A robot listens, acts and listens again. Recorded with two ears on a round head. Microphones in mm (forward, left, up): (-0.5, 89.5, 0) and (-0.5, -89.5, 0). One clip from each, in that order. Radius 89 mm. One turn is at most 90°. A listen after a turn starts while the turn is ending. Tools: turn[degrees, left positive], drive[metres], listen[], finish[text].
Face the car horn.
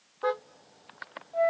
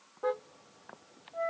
Thought: The car horn: about 45° left or 135° left.
Action: turn[45]
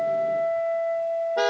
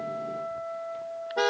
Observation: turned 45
Action: finish[Found it: a car horn, straight ahead.]